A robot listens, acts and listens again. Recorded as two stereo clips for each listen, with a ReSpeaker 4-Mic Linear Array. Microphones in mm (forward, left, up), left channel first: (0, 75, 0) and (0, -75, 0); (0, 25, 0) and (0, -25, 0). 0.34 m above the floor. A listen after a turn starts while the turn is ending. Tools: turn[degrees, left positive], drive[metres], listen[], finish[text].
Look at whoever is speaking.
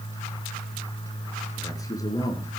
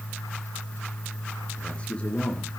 Thought: The man speaking: about 25° left or 155° left.
Action: turn[25]
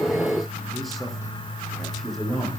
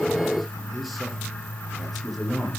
Action: finish[Found it: a man speaking, straight ahead, over 4 m away.]